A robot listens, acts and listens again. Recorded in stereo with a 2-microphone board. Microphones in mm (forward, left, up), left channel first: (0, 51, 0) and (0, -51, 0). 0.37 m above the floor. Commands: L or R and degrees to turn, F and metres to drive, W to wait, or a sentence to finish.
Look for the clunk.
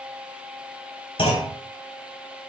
L70
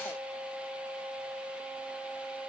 W
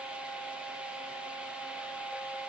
I heard a clunk, but can't make it out now. It was about straight ahead or 40° left.